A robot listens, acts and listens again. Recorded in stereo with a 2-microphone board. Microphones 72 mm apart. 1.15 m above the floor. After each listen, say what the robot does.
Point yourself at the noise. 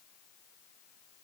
Keep listening.
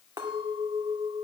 Turn 70° right.
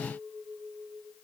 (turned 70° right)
Facing the clink.